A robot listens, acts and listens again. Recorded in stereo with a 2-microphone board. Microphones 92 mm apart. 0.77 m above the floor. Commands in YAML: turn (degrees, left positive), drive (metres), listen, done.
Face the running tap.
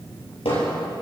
listen: true
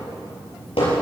listen: true
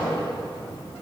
done: "I can't make out a running tap to turn to."